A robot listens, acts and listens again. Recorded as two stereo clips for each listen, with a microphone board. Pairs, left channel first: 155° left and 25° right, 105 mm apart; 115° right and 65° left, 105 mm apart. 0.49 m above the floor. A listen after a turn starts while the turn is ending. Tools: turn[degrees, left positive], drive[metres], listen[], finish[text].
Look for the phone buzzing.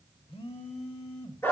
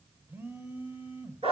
Thought: The phone buzzing: 135° left.
Action: turn[135]
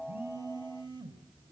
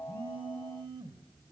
Thought: The phone buzzing is now 25° left.
Action: turn[25]
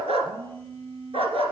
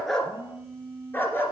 Action: finish[Found it: a phone buzzing, straight ahead, under 1 m away.]